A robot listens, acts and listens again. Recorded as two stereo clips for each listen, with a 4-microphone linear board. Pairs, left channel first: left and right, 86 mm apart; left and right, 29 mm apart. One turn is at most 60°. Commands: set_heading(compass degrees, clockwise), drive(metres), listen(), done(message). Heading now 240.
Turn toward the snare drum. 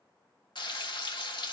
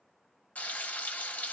listen()
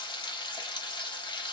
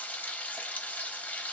listen()
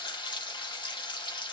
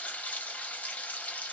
done("I can't make out a snare drum to turn to.")